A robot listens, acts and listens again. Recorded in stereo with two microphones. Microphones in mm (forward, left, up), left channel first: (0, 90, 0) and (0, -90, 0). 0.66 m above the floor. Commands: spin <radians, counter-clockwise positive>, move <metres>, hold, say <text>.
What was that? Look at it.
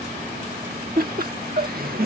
spin -0.96
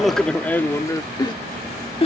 spin 0.61
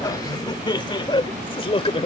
spin 0.52
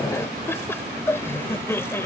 spin 0.26
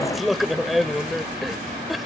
say Facing the laughter.